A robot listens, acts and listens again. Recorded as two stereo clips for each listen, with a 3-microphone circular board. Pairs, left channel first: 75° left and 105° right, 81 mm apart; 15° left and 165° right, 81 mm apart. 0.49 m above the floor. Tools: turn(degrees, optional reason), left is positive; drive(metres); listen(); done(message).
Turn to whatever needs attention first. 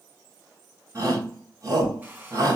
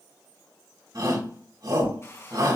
turn(degrees=-140, reason="The shout: 140° right.")
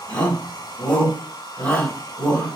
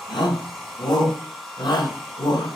done("Found it: a shout, straight ahead.")